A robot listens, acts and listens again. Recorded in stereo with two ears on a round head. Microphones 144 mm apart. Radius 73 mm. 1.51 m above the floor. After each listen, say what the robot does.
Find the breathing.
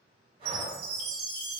Turn 35° right.
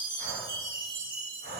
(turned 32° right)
Turn 110° right.
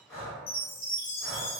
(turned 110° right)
Found it: breathing, straight ahead, 1 to 2 m away.